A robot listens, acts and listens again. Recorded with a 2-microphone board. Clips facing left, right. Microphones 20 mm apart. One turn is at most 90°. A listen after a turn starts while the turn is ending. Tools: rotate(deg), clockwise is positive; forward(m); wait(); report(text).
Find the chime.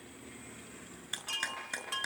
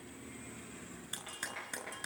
rotate(-60)
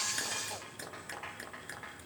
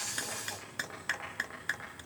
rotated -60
wait()
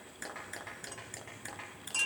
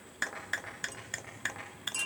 rotate(-15)
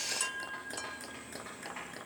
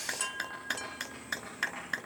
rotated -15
report("Found it: a chime, straight ahead, under 1 m away.")